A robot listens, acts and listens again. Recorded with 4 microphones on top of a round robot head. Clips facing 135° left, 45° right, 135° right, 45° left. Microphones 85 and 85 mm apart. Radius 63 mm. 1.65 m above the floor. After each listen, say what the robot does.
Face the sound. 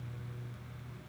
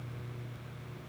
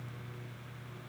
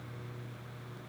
Keep listening.
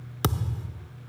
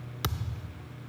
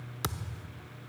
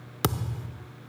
Turn 85° left.
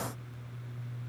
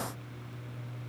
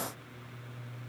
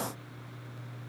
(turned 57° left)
Turn 30° left.
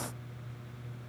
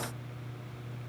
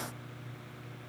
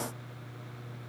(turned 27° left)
I heard a thud from this way, but can't make it out now.